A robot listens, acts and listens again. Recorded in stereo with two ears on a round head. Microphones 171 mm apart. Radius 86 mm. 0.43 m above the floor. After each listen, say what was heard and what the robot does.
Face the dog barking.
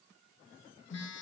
Keep listening.
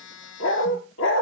The dog barking: about 70° left or 110° left. Turn 70° left.
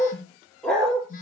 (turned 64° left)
Found it: a dog barking, straight ahead.